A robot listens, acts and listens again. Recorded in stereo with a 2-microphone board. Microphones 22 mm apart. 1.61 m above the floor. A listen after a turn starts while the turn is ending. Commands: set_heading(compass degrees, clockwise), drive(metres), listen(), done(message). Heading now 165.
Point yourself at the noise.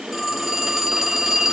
set_heading(135)
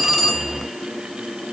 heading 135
listen()
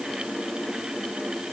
listen()
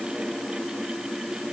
done("I heard a phone ringing, but can't make it out now. It was about 30° right or 150° left.")